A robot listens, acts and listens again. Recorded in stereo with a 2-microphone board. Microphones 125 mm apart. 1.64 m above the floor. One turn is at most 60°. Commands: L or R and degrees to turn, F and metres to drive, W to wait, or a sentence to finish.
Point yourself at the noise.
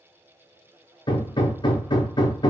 L40
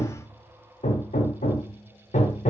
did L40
L60
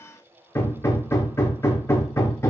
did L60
L20
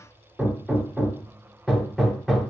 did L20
Found it: hammering, straight ahead, under 1 m away.